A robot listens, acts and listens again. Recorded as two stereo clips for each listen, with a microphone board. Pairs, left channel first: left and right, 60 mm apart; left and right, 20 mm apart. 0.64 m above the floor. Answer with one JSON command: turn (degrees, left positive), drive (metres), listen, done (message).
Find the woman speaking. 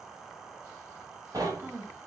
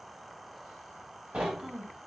{"turn": -35}
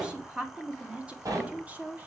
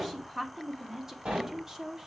{"turn": -25}
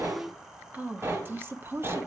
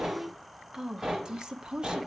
{"turn": -40}
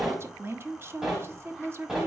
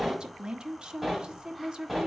{"turn": -40}
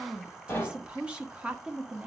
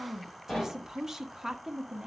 {"turn": -15}
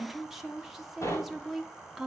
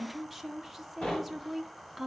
{"done": "Facing the woman speaking, 1 to 2 m away."}